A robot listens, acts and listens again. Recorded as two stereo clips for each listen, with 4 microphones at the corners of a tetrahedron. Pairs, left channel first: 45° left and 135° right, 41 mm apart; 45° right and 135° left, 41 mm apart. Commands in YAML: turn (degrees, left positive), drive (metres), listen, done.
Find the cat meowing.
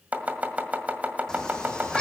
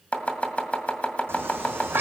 turn: 115
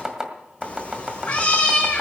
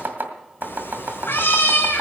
turn: -20
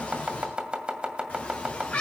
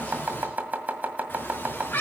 turn: -10
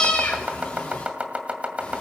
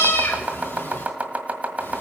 done: "Found it: a cat meowing, straight ahead, 2 to 4 m away."